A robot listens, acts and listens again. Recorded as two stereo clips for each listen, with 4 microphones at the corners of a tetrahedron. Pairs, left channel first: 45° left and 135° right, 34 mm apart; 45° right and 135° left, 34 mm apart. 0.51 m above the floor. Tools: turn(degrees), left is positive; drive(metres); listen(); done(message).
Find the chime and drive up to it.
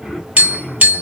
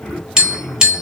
listen()
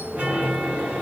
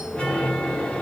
turn(degrees=-95)
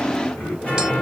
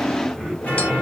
drive(metres=1.0)
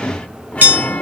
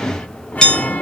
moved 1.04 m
drive(metres=1.0)
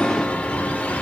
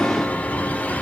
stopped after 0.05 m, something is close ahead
done("I am next to the chime.")